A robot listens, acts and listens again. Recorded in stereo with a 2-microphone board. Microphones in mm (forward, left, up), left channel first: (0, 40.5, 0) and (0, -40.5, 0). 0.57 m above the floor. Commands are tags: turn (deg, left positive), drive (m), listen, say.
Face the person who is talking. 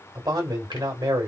<turn deg="-60"/>
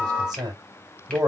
<turn deg="-55"/>
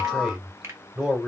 <say>Found it: a man speaking, straight ahead, 1 to 2 m away.</say>